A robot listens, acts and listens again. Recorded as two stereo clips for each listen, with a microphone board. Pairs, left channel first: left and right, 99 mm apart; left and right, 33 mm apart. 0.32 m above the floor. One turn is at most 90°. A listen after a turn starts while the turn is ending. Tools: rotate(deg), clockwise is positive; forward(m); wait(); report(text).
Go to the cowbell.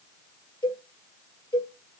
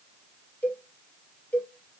rotate(-50)
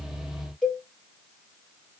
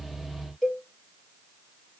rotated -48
forward(1.0)
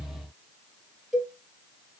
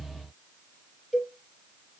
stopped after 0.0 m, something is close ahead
report("Something is in my way. I am facing the cowbell but have not reached it.")